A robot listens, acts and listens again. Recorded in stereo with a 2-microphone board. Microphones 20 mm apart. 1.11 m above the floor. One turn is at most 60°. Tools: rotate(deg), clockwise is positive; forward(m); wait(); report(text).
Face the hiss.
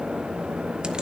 wait()
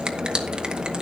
wait()
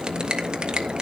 report("I can't make out a hiss, only a finger snap.")